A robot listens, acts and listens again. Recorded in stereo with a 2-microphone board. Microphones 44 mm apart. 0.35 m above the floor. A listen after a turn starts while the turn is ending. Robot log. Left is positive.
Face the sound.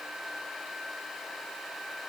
cmd idle
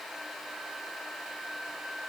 cmd idle
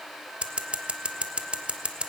note: The scissors: about 25° right or 155° right.
cmd yaw -25
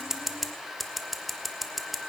end: Facing the scissors.